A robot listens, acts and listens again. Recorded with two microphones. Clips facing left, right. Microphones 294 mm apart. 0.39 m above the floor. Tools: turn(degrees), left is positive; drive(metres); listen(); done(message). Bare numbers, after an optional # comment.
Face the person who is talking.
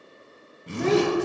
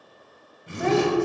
# The child speaking: about 45° left or 135° left.
turn(45)
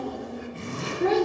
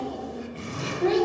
# So it is at 90° left.
turn(90)
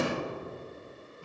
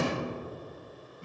listen()
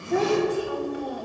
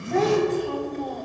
# The child speaking is now 10° left.
turn(10)
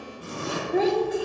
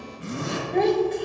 done("Facing the child speaking, 1 to 2 m away.")